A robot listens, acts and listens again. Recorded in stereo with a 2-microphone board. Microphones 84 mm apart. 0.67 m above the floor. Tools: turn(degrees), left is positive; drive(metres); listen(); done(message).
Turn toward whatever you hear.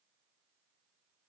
listen()
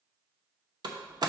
turn(degrees=-55)
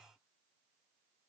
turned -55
listen()
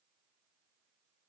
done("I heard a door slam, but can't make it out now. It was about straight ahead or 70° right.")